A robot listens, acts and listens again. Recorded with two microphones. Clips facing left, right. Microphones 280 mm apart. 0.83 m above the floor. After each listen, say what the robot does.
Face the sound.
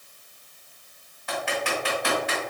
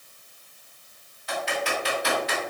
Turn 55° left.
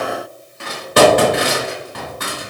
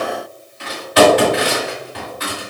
Turn 60° left.
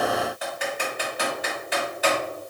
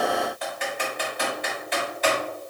Found it: typing on a keyboard, straight ahead.